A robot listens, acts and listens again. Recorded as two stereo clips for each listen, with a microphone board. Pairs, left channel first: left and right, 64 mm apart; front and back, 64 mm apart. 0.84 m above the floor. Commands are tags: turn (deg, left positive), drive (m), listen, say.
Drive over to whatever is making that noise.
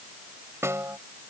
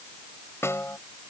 <turn deg="-45"/>
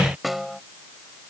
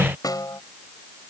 <drive m="1.0"/>
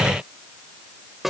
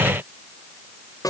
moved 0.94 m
<drive m="1.0"/>
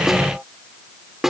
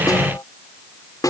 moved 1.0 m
<drive m="1.0"/>
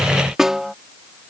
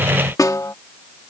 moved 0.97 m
<turn deg="-10"/>
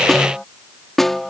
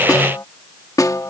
<drive m="1.0"/>
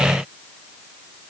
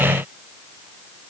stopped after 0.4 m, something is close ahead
<listen/>
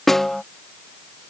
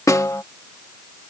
<say>I am next to the snare drum.</say>